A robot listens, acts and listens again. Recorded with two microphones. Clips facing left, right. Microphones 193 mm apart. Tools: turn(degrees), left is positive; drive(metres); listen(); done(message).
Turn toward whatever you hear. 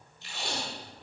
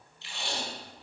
turn(degrees=45)
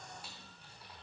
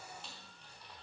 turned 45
listen()
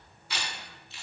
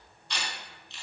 done("Facing the tape being pulled, 2 to 4 m away.")